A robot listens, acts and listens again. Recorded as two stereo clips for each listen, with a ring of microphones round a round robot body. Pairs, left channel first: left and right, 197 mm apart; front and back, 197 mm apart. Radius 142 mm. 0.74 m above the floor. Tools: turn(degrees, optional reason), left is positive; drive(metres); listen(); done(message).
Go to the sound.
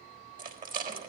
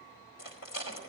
turn(degrees=-50, reason="The rattle: 50° right.")
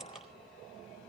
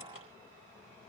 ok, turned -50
listen()
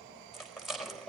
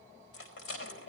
drive(metres=1.0)
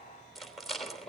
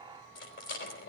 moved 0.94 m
drive(metres=1.0)
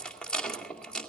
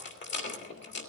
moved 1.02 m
drive(metres=1.0)
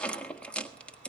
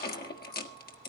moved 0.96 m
drive(metres=1.0)
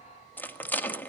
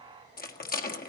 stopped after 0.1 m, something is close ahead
turn(degrees=10, reason="The rattle is now 10° left.")
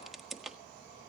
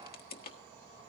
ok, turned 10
done("I am next to the rattle.")